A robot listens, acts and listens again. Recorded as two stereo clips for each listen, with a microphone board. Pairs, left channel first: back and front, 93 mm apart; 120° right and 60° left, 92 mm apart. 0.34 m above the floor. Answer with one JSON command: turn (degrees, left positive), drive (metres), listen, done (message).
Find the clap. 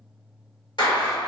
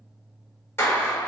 {"turn": -175}
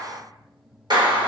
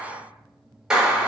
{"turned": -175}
{"turn": -20}
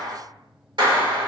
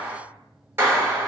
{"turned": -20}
{"done": "Found it: a clap, straight ahead."}